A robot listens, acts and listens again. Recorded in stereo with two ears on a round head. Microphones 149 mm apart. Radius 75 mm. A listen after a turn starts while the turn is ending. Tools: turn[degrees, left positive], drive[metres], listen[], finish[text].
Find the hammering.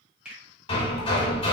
Thought: The hammering: about 35° left or 145° left.
Action: turn[35]
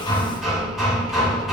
Action: finish[Facing the hammering, under 1 m away.]